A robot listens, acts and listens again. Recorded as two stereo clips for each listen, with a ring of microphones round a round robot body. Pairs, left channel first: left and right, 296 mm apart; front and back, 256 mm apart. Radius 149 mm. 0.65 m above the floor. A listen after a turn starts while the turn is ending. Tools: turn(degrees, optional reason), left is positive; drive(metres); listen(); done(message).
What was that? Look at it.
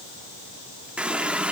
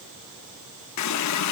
done("Found it: a running tap, straight ahead, under 1 m away.")